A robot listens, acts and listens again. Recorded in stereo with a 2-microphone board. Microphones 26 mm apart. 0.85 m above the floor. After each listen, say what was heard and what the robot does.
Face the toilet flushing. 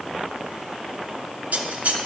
Keep listening.
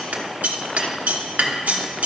Keep listening.
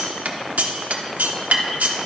I can't make out a toilet flushing to turn to.